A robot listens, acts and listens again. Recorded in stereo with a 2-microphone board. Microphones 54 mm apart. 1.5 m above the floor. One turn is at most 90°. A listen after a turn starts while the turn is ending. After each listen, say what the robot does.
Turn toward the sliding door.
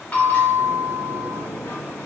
Turn 70° left.
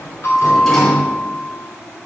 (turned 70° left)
Turn 10° left.
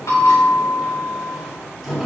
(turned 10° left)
Facing the sliding door, 2 to 4 m away.